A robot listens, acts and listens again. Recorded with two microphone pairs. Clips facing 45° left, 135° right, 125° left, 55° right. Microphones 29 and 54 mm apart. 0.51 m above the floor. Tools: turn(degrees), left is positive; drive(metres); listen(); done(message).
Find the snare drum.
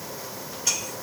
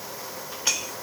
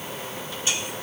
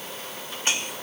listen()
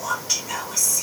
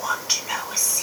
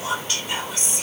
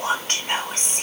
listen()
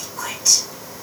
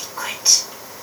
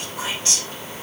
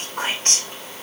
done("I can't make out a snare drum to turn to.")